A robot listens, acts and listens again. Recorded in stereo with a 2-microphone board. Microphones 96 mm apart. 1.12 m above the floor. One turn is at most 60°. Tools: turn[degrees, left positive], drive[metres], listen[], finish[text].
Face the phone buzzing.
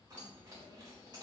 Action: listen[]
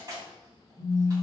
Thought: The phone buzzing: about 55° right or 125° right.
Action: turn[-55]
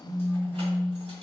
Thought: So it is at 10° right.
Action: turn[-10]
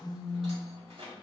Action: finish[Facing the phone buzzing.]